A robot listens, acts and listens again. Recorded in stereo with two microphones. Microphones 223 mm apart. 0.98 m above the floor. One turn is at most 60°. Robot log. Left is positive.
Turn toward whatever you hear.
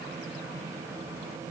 cmd idle
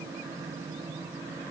cmd idle
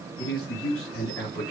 cmd yaw +60
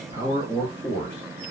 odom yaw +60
note: So it is at 20° left.
cmd yaw +20
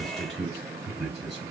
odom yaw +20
end: Found it: a man speaking, straight ahead, 2 to 4 m away.